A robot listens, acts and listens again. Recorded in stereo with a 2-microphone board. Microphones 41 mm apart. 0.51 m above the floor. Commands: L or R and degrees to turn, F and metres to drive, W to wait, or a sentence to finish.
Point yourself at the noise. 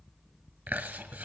R50
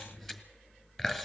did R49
Facing the chewing, 1 to 2 m away.